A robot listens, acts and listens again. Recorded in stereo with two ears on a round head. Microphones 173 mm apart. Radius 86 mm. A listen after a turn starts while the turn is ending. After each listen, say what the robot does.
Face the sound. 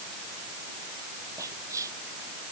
Turn 15° right.
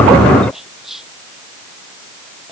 Facing the whispering.